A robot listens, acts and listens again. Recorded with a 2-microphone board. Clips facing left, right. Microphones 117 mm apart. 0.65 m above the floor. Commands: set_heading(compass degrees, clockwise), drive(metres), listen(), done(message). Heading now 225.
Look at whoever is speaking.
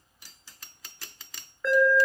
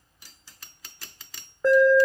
listen()
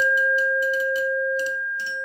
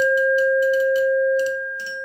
listen()
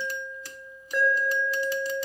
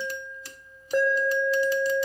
done("I can't make out anyone speaking to turn to.")